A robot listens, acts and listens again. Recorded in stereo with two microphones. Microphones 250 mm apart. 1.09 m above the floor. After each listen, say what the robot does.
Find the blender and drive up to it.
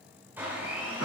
Turn 30° right.
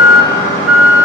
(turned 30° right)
Keep listening.
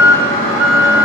Keep listening.
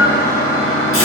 I heard a blender, but can't make it out now. It was about 20° left or 140° right. I did not reach it.